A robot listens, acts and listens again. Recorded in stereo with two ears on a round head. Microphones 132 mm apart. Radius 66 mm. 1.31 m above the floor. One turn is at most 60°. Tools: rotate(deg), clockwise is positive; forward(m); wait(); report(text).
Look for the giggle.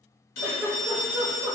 rotate(20)
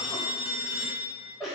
report("Facing the giggle.")